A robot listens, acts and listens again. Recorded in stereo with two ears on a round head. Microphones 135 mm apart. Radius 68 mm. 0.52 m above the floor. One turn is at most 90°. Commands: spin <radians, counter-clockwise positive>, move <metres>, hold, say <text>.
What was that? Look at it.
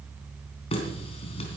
spin 0.70
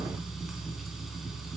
say Found it: a running tap, straight ahead.